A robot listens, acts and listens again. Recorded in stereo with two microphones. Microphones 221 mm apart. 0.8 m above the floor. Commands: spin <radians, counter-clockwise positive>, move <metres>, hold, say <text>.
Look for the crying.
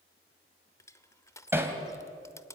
hold
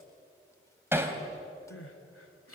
spin 1.57
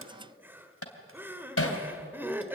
spin -0.17
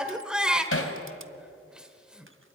say Facing the crying, 1 to 2 m away.